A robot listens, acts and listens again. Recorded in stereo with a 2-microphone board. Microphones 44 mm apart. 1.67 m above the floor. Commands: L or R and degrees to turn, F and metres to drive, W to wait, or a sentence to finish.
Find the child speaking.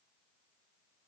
W
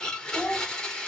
R20
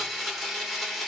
W
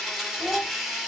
R140
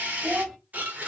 Found it: a child speaking, straight ahead, 2 to 4 m away.